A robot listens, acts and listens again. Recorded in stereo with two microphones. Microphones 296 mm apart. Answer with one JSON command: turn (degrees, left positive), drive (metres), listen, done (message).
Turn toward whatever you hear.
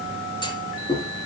{"turn": 15}
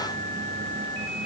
{"listen": true}
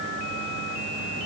{"done": "I heard a clunk, but can't make it out now. It was about straight ahead or 150° left."}